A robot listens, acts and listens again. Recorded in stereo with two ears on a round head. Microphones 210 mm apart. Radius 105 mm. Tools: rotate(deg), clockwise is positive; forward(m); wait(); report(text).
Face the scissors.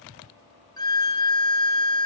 wait()
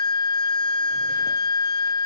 wait()
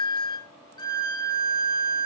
report("I can't make out scissors to turn to.")